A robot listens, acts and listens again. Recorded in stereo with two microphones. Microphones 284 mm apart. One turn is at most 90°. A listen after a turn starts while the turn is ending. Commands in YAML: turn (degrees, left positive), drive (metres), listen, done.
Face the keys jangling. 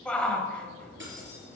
turn: -40
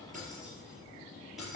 done: "Found it: keys jangling, straight ahead."